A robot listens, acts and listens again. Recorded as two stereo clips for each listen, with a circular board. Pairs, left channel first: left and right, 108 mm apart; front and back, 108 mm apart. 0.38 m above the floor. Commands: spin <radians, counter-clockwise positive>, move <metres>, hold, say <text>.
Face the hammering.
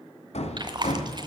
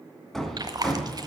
spin 1.48
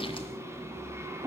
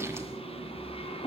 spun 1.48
spin -0.44
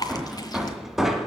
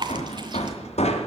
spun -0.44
say Found it: hammering, straight ahead, 1 to 2 m away.